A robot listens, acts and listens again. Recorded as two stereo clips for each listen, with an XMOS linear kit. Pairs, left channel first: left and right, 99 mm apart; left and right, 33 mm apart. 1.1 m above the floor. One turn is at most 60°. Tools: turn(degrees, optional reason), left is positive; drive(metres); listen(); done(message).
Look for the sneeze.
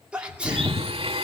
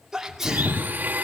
turn(degrees=-30)
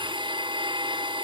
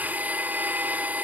listen()
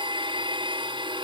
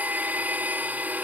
done("I heard a sneeze, but can't make it out now. It was about 20° left or 140° right.")